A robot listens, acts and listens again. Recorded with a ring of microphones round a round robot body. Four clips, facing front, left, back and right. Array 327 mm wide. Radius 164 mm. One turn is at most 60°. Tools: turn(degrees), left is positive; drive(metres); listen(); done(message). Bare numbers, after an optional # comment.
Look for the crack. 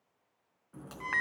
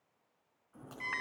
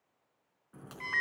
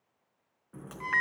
# The crack: 100° right.
turn(-60)
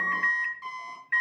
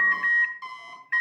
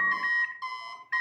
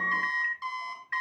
# Nothing new. It was at 40° right.
turn(-40)
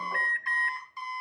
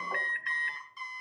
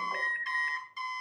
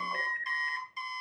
done("I heard a crack from this way, but can't make it out now.")